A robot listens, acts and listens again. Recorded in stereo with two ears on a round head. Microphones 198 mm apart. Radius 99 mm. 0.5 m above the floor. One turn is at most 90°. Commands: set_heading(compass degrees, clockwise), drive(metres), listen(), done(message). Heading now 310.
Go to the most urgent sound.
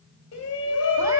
set_heading(240)
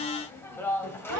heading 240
set_heading(230)
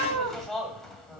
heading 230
drive(1.0)
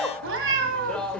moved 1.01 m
drive(1.0)
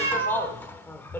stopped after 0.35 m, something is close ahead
set_heading(220)
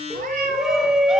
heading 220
done("Arrived at the shout, straight ahead.")